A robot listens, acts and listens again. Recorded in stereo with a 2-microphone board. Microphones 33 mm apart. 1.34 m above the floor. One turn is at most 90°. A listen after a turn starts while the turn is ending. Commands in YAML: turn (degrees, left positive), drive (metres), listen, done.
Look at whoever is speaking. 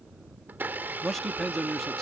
turn: 30
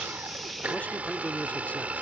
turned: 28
turn: 90
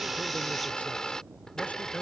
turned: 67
turn: 65
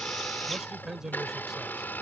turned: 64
turn: -10
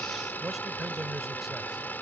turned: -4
done: "Facing the man speaking."